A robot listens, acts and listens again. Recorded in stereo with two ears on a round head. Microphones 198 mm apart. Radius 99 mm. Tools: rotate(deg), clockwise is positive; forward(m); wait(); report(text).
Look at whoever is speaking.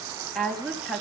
rotate(-30)
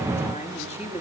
rotate(-150)
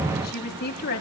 rotate(-45)
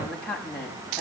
report("Facing the woman speaking.")